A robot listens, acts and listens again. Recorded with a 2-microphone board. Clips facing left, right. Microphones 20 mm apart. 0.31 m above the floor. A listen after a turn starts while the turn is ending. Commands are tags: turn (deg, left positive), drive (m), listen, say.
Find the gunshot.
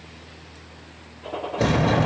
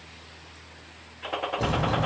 <turn deg="-65"/>
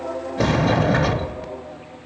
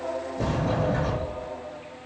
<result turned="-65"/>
<listen/>
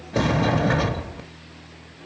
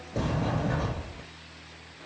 <say>I heard a gunshot, but can't make it out now. It was about straight ahead or 50° right.</say>